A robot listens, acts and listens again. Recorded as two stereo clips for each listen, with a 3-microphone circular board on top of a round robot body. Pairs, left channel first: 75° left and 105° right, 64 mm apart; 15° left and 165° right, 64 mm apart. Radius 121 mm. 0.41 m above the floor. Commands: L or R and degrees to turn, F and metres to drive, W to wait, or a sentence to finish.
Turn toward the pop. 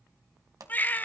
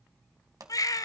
R135
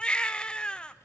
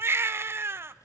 I heard a pop from this way, but can't make it out now.